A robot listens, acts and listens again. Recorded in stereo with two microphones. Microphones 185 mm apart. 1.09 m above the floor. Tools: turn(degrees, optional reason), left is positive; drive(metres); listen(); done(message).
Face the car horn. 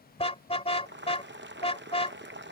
turn(degrees=30, reason="The car horn: about 30° left or 150° left.")
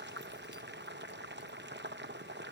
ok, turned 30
listen()
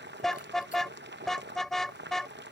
done("Facing the car horn.")